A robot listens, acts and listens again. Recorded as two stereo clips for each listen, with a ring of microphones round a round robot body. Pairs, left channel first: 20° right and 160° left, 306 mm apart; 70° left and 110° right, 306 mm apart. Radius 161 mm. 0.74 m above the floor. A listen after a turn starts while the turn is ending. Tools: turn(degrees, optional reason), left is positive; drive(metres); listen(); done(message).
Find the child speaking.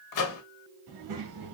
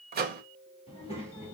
turn(degrees=145, reason="The child speaking: 145° left.")
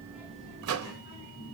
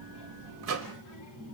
turn(degrees=40, reason="The child speaking is now 40° left.")
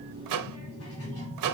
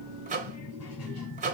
turn(degrees=25, reason="The child speaking is now 25° left.")
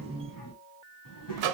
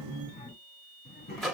done("Found it: a child speaking, straight ahead, 2 to 4 m away.")